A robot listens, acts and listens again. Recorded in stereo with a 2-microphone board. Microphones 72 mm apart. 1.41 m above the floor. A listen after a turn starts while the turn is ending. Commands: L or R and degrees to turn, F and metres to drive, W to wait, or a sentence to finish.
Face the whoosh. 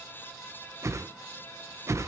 R45
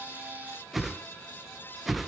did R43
Found it: a whoosh, straight ahead.